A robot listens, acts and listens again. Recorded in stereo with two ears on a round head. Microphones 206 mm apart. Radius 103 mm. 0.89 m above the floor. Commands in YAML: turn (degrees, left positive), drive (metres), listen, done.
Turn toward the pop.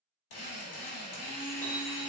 listen: true
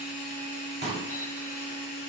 turn: -25
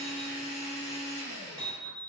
listen: true
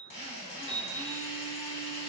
done: "I heard a pop, but can't make it out now. It was about straight ahead or 130° right."